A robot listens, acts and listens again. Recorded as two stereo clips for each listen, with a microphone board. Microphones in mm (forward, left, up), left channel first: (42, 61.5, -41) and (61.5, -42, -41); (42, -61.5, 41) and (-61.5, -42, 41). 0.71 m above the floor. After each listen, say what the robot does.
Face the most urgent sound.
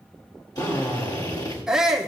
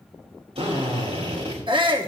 Turn 165° right.
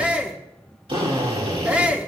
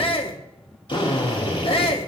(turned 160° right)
Facing the shout.